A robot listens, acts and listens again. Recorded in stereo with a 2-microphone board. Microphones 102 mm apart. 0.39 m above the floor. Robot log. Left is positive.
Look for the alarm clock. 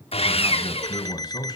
note: The alarm clock: about 40° left or 140° left.
cmd yaw +40
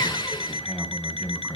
note: So it is at 95° left.
cmd yaw +95
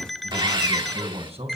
end: Facing the alarm clock.